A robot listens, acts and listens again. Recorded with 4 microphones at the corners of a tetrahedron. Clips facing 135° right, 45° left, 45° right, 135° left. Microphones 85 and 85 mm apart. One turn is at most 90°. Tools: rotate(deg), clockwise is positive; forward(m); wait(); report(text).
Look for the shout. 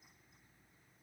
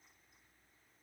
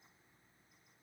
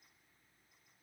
wait()
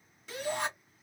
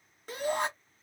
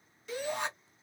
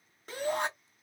rotate(-90)
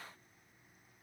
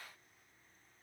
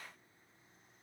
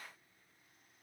wait()
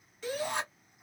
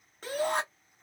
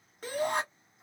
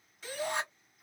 report("Found it: a shout, straight ahead, 1 to 2 m away.")